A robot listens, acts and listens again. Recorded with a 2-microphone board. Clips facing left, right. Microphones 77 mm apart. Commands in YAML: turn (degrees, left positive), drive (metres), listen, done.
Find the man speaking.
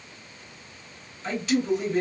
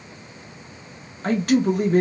turn: -55
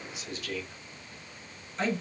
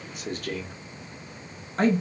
turn: -60
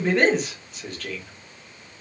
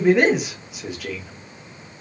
turn: -10
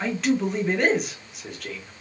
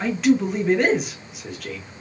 done: "Facing the man speaking."